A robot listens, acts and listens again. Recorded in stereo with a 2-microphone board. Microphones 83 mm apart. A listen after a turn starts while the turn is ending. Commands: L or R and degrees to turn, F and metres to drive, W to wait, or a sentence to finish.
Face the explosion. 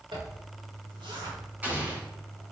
R20
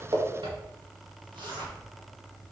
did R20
W
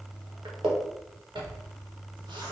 I heard an explosion, but can't make it out now. It was about straight ahead or 140° right.